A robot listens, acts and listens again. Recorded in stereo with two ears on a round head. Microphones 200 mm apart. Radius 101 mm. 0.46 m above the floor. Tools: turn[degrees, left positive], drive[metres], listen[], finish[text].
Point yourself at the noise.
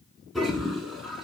Action: turn[30]
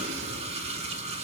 Thought: So it is at 30° right.
Action: turn[-30]
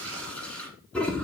Action: finish[Found it: a toilet flushing, straight ahead.]